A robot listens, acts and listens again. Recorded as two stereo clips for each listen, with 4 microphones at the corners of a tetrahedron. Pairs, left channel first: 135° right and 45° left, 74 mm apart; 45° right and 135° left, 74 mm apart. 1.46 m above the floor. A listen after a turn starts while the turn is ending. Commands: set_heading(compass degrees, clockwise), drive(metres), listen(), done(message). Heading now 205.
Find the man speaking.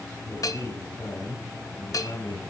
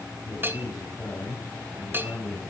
set_heading(315)
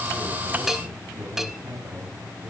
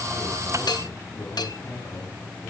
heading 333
set_heading(323)
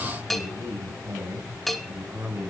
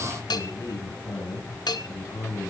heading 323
set_heading(333)
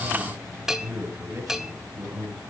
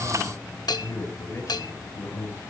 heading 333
done("Facing the man speaking, over 4 m away.")